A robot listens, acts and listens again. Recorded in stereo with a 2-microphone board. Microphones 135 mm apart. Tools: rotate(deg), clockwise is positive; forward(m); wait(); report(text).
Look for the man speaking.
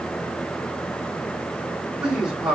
rotate(30)
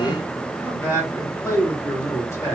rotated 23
rotate(-20)
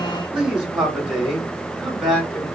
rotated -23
report("Found it: a man speaking, straight ahead.")